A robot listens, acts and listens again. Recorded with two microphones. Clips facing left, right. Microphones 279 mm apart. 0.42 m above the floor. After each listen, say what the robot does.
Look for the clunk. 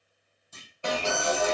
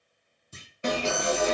Turn 35° right.
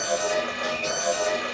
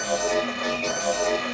Keep listening.
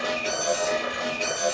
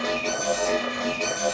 I heard a clunk, but can't make it out now. It was about straight ahead or 110° right.